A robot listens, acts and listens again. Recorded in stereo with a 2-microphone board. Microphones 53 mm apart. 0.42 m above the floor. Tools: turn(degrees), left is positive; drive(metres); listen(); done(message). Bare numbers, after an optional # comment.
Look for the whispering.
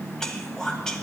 turn(30)
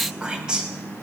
# So it is at 15° right.
turn(-15)
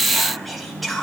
done("Facing the whispering.")